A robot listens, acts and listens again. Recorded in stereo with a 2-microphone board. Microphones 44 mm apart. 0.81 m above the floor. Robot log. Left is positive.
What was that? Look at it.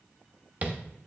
note: The tapping: about 30° right or 150° right.
cmd yaw -30
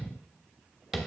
end: Facing the tapping.